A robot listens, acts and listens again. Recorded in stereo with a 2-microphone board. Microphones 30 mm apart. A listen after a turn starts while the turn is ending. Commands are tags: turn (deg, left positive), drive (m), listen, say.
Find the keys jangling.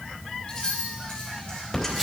<turn deg="25"/>
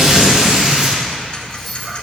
<say>Found it: keys jangling, straight ahead.</say>